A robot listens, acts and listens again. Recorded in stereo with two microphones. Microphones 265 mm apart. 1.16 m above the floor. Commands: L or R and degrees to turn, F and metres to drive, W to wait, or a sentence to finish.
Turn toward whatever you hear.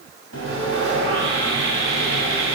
L75
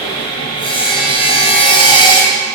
L20
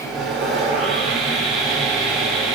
Found it: sawing, straight ahead.